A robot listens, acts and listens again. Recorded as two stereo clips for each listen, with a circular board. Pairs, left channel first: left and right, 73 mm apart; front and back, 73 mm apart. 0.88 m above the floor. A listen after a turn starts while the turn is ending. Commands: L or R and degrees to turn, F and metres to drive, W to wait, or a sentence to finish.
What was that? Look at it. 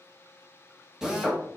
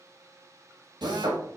R170
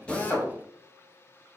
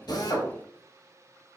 W
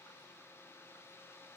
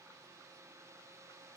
W
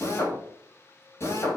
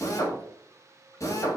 L40
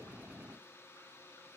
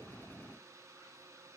W
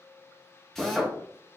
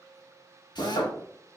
Facing the drill.